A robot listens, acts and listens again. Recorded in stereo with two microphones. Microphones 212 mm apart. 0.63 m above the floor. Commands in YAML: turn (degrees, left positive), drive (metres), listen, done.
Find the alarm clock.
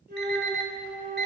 turn: 30
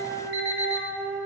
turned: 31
turn: 145
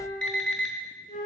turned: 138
done: "Found it: an alarm clock, straight ahead, 1 to 2 m away."